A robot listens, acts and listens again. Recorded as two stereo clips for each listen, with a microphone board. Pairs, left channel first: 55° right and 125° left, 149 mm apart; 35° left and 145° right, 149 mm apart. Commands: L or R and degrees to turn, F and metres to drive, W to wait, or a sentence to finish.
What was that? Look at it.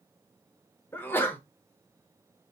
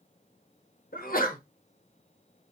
L20
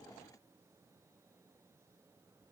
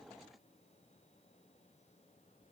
I heard a sneeze from this way, but can't make it out now.